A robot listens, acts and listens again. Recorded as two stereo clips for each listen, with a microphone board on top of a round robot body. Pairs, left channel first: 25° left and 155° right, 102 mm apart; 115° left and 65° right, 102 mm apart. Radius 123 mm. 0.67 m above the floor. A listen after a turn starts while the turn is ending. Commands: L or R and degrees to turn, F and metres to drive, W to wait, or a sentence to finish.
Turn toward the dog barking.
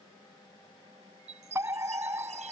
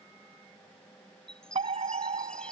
W
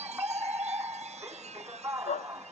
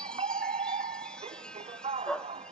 L30
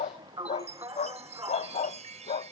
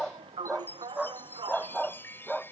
L20
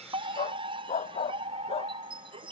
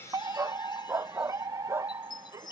Found it: a dog barking, straight ahead.